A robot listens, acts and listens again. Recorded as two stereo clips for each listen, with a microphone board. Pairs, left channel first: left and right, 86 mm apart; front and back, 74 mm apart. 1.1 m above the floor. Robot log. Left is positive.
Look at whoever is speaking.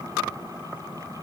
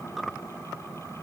cmd idle
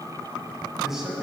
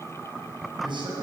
note: The man speaking: 175° right.
cmd yaw -175
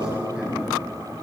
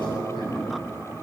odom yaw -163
note: The man speaking is now 10° right.
cmd yaw -10
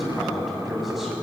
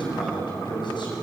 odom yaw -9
end: Found it: a man speaking, straight ahead, over 4 m away.